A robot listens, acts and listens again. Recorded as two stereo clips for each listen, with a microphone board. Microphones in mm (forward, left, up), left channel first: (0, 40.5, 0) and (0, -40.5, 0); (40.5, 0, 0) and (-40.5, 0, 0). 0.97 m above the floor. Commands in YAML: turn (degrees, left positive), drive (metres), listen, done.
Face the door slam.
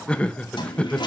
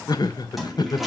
listen: true
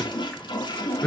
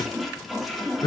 listen: true
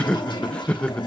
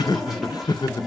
done: "I can't make out a door slam to turn to."